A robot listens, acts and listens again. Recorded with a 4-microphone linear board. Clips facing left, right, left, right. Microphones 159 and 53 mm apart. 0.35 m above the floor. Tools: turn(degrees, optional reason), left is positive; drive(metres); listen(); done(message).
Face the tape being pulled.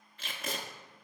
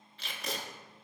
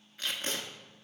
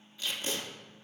turn(degrees=50, reason="The tape being pulled: about 50° left or 130° left.")
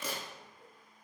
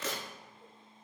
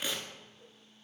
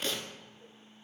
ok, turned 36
turn(degrees=15, reason="So it is at 15° left.")
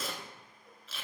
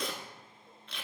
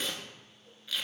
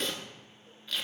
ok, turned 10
done("Facing the tape being pulled.")